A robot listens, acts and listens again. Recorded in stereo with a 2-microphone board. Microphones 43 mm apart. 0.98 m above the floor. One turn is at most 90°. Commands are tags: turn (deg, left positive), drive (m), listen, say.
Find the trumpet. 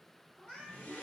<listen/>
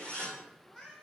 <listen/>
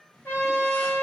<turn deg="60"/>
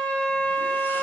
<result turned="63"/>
<turn deg="45"/>
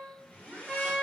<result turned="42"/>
<say>Found it: a trumpet, straight ahead.</say>